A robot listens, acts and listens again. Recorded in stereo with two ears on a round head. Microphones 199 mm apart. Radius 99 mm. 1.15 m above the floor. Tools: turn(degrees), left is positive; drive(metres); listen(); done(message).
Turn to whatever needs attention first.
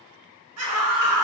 turn(degrees=-90)
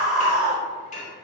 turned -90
done("Found it: a scream, straight ahead.")